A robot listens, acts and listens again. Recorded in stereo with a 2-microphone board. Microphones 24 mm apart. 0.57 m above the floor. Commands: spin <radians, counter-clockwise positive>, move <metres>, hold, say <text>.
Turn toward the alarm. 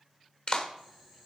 hold
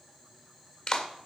hold
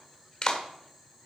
say I can't make out an alarm to turn to.